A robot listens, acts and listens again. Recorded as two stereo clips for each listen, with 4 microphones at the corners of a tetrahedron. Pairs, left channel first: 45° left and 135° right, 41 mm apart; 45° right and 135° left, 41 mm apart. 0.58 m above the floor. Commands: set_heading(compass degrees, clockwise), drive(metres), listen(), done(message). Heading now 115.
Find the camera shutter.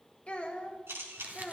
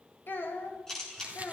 set_heading(240)
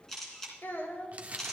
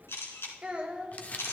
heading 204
set_heading(239)
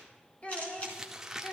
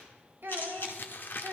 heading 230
set_heading(240)
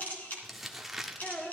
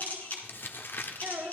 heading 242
done("Facing the camera shutter.")